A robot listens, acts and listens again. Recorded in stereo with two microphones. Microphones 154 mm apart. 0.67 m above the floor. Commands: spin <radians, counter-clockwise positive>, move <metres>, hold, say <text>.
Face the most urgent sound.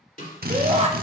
spin -0.79
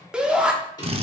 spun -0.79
spin -0.17
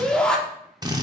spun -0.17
say Found it: a shout, straight ahead.